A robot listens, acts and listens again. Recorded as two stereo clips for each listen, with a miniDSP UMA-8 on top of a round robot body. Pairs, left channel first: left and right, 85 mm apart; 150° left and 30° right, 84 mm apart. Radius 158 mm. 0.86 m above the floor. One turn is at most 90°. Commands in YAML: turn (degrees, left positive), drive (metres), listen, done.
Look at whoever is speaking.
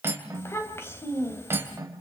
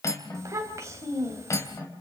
turn: 25
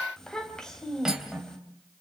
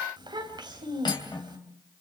done: "Found it: a child speaking, straight ahead."